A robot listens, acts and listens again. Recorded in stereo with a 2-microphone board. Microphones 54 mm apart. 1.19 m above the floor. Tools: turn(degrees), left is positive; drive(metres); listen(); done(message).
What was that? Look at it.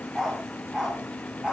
turn(degrees=-30)
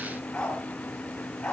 turn(degrees=15)
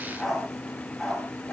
done("Found it: a dog barking, straight ahead, over 4 m away.")